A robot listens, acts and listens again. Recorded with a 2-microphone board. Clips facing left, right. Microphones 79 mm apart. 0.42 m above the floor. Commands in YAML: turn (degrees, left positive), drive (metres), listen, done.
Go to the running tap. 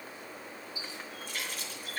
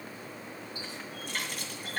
turn: -60
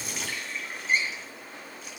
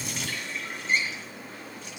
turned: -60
drive: 1.0
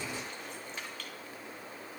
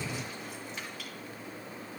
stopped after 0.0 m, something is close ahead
done: "Blocked. The running tap is further on, straight ahead."